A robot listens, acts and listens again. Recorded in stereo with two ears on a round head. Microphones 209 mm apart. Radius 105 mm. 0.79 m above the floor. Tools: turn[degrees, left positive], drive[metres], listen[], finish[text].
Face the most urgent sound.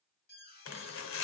Thought: The alarm: about 40° left or 140° left.
Action: turn[40]
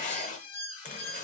Thought: So it is at 90° left.
Action: turn[90]
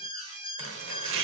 Thought: The alarm is now 20° right.
Action: turn[-20]
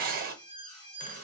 Action: finish[Found it: an alarm, straight ahead.]